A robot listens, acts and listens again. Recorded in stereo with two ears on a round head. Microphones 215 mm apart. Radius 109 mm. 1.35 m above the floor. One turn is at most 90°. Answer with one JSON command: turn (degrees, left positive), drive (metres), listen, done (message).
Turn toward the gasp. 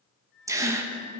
{"turn": -30}
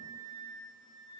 {"listen": true}
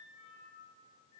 {"done": "I heard a gasp, but can't make it out now. It was about 20° left or 140° right."}